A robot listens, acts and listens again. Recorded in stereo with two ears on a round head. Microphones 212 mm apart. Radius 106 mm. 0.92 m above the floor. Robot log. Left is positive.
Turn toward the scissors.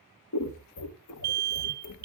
note: The scissors: about 70° left or 110° left.
cmd yaw +70
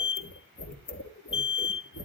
note: So it is at 40° left.
cmd yaw +40
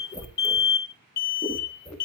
note: The scissors is now 10° left.
cmd yaw +10
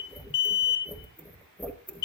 end: Facing the scissors.